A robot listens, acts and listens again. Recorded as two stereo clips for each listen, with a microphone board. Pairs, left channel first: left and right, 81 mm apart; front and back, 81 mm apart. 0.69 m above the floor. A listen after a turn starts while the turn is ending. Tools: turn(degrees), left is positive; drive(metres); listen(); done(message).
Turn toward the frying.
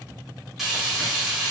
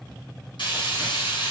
done("Found it: frying, straight ahead, 1 to 2 m away.")